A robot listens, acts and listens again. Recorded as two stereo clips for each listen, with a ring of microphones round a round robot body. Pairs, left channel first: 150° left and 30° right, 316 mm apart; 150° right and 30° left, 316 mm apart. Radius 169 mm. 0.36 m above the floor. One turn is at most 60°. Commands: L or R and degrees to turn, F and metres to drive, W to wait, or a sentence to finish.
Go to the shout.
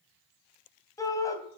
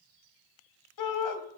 R60
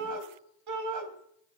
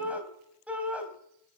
R55
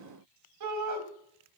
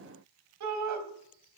F1.0
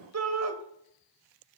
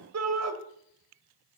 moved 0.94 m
F1.0
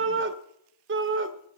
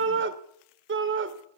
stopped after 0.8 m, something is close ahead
Arrived at the shout, straight ahead.